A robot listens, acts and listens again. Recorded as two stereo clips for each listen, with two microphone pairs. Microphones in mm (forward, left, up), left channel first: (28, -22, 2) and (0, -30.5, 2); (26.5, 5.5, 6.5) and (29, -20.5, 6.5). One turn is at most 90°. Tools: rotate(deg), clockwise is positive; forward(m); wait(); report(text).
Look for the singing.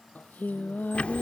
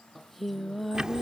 rotate(-10)
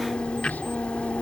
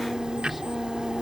wait()
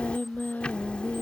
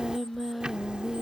report("Found it: singing, straight ahead.")